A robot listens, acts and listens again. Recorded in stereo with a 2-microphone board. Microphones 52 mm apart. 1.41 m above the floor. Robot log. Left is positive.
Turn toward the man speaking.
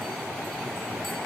cmd idle
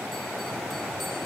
cmd idle
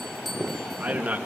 note: The man speaking: about 30° right or 150° right.
cmd yaw -30
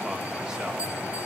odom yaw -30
cmd idle
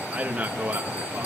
note: The man speaking: about 30° right or 150° right.
cmd yaw -30
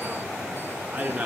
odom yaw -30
note: The man speaking: about 25° right or 155° right.
cmd yaw -25
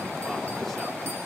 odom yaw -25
cmd idle
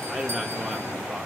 cmd idle
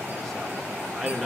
end: Found it: a man speaking, straight ahead, 2 to 4 m away.